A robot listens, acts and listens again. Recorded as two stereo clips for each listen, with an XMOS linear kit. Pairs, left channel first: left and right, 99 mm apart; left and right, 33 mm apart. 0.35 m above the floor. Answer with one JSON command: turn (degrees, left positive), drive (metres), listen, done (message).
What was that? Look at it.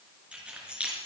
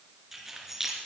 {"turn": -30}
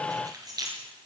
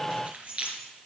{"turn": -135}
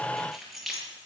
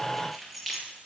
{"done": "Found it: keys jangling, straight ahead."}